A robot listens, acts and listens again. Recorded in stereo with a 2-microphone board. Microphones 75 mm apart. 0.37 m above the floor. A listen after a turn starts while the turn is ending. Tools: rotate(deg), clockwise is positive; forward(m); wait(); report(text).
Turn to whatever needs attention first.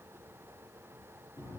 wait()
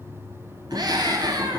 rotate(65)
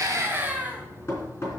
rotate(25)
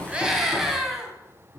report("Found it: a scream, straight ahead, 2 to 4 m away.")